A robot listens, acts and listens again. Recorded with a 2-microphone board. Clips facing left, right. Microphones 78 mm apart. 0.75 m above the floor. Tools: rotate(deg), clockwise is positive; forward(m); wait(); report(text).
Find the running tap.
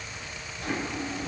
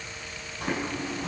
wait()
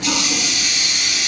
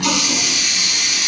rotate(60)
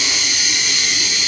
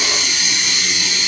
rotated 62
rotate(60)
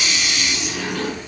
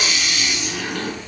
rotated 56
report("Found it: a running tap, straight ahead.")